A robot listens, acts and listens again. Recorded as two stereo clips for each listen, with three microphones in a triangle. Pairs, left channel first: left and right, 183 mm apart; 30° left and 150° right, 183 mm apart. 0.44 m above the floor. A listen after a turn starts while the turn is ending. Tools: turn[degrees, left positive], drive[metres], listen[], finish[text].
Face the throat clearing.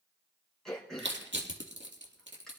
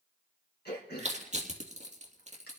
Action: finish[Found it: throat clearing, straight ahead, over 4 m away.]